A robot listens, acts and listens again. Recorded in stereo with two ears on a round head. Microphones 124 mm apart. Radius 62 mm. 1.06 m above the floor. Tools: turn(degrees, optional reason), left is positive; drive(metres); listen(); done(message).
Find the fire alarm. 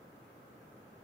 listen()
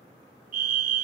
turn(degrees=-65, reason="The fire alarm: about 65° right or 115° right.")
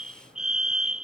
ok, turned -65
done("Facing the fire alarm.")